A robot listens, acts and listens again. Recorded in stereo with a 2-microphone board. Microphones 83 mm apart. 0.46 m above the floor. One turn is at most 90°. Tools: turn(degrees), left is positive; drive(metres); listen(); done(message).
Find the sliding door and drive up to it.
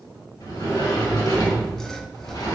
turn(degrees=55)
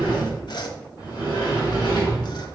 turn(degrees=65)
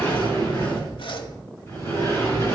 turn(degrees=35)
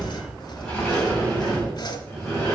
drive(metres=1.0)
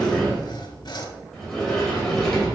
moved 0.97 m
turn(degrees=10)
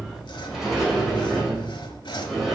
drive(metres=1.0)
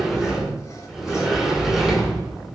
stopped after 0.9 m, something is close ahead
done("Arrived at the sliding door, straight ahead.")